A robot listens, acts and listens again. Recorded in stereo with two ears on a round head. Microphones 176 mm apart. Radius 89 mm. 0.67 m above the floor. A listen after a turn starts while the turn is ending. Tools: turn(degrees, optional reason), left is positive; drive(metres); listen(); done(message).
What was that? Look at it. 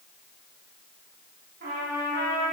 turn(degrees=-50, reason="The trumpet: about 50° right or 130° right.")
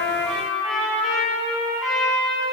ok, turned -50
done("Facing the trumpet, 1 to 2 m away.")